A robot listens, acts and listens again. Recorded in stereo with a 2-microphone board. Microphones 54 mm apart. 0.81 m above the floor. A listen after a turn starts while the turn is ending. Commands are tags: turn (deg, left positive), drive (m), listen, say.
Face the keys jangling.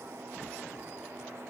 <listen/>
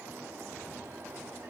<listen/>
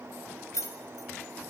<turn deg="65"/>
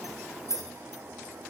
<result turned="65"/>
<turn deg="65"/>
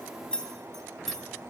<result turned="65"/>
<say>Found it: keys jangling, straight ahead.</say>